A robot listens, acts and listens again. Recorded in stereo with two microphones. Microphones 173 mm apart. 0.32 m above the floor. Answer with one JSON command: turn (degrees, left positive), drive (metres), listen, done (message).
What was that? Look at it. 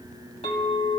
{"turn": 40}
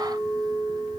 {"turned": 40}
{"done": "Found it: a clink, straight ahead, 1 to 2 m away."}